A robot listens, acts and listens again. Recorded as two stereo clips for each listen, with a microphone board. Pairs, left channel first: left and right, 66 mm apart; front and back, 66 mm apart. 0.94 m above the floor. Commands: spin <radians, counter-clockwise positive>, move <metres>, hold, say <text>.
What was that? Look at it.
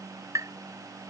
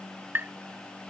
spin -2.18
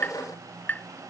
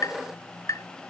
spin 0.44
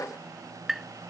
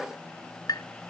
say Found it: tapping, straight ahead.